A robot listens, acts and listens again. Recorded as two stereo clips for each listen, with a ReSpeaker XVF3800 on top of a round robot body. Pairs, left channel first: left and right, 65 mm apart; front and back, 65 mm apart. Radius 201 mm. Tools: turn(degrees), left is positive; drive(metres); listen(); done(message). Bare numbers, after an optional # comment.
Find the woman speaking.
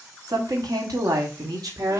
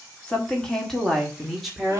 # The woman speaking: 95° right.
turn(-95)
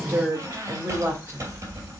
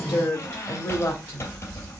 # The woman speaking is now 30° right.
turn(-30)
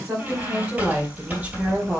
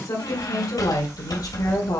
# The woman speaking is now 20° right.
turn(-20)
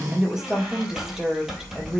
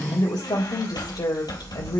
done("Found it: a woman speaking, straight ahead, 2 to 4 m away.")